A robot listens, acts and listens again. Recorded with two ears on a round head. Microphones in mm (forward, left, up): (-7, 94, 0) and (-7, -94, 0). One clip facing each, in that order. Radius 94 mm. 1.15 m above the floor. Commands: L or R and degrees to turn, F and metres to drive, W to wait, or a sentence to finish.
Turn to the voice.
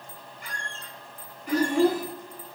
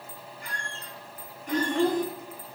L30
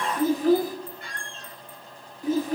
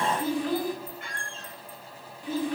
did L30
L140
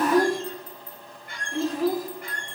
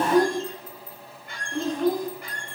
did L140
Facing the child speaking, 1 to 2 m away.